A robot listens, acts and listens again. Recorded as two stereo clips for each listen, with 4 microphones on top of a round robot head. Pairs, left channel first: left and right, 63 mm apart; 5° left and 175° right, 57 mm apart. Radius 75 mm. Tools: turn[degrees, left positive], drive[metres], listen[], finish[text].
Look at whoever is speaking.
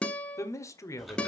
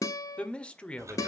Thought: The man speaking: 70° left.
Action: turn[70]
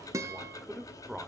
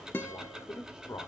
Action: finish[Facing the man speaking, 1 to 2 m away.]